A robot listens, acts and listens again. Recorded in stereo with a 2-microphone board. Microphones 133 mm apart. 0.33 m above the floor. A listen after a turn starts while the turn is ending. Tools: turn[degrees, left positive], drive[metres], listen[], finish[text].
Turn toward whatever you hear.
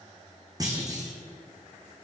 Thought: The clunk: about 30° right or 150° right.
Action: turn[-30]
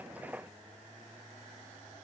Action: listen[]
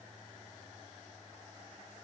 Action: finish[I heard a clunk, but can't make it out now. It was about straight ahead or 120° right.]